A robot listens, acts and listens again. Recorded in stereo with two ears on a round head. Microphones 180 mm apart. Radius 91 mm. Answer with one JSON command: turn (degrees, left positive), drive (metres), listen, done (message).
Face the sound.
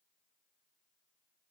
{"listen": true}
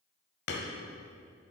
{"turn": 55}
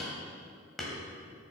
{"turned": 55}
{"done": "Found it: hammering, straight ahead, 1 to 2 m away."}